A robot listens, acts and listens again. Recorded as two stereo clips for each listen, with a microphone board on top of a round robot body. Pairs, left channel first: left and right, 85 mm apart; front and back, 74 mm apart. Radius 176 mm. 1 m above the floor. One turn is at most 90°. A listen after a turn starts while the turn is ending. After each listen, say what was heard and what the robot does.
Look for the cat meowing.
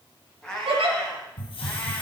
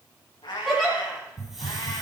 The cat meowing: 10° left. Turn 10° left.
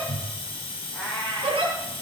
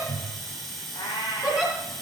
Found it: a cat meowing, straight ahead, over 4 m away.